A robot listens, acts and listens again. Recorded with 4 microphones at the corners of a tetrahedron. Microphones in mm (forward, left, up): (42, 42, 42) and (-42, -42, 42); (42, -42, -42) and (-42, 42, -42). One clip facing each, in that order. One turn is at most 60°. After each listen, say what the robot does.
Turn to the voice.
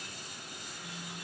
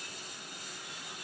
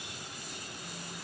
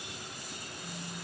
Keep listening.
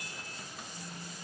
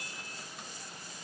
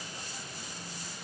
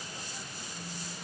Keep listening.
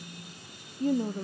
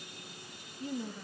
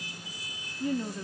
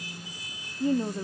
Turn 60° left.
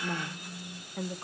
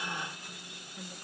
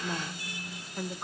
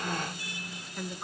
Turn 30° left.
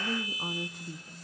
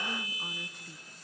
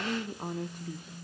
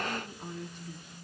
Turn 10° right.
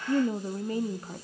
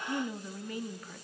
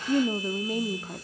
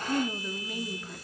Facing the woman speaking, under 1 m away.